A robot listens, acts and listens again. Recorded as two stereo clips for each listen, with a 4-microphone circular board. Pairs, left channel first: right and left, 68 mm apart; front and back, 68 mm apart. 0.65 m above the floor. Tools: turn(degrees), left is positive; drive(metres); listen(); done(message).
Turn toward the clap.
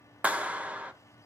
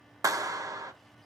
turn(degrees=155)
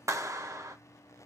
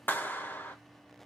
turn(degrees=55)
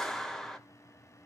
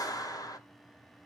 done("Found it: a clap, straight ahead, under 1 m away.")